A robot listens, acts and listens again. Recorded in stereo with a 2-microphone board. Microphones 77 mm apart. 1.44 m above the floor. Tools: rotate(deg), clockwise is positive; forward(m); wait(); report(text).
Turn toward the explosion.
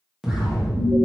rotate(30)
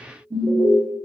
wait()
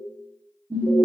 report("I heard an explosion, but can't make it out now. It was about 20° left or 140° right.")